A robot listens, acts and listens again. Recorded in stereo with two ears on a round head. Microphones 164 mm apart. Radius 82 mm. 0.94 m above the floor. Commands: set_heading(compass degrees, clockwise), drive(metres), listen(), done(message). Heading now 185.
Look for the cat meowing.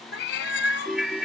set_heading(120)
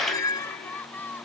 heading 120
set_heading(95)
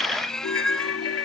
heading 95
done("Facing the cat meowing.")